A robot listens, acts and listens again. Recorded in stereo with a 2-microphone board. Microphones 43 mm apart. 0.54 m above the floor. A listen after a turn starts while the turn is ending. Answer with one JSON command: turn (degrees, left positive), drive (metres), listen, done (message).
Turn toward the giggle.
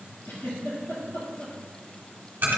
{"turn": 90}
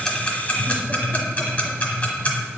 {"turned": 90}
{"listen": true}
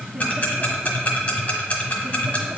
{"listen": true}
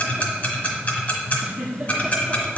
{"turn": -10}
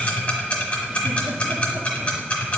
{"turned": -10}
{"listen": true}
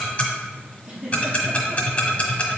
{"done": "Facing the giggle."}